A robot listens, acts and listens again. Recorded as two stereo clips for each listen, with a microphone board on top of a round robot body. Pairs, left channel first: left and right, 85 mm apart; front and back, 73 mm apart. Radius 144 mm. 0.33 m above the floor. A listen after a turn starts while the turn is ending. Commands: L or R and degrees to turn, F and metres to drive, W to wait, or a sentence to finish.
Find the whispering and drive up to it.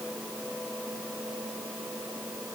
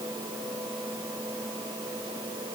W
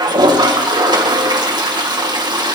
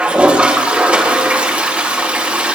W
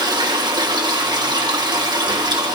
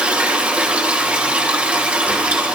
I can't make out whispering, only a toilet flushing.